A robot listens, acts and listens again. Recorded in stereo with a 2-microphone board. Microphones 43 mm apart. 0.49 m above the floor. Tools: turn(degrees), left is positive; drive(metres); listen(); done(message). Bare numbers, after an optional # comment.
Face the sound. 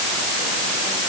listen()
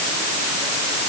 listen()
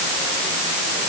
done("I can't make out anything to turn to.")